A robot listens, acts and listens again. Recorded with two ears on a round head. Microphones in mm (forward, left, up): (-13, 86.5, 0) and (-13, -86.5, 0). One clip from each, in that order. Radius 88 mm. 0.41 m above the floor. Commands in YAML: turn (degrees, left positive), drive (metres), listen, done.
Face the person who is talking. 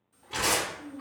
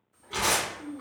turn: 50
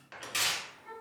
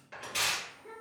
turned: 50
turn: 70
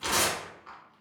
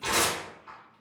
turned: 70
listen: true
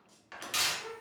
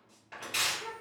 turn: 10
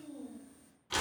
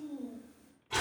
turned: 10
done: "Found it: a child speaking, straight ahead, 1 to 2 m away."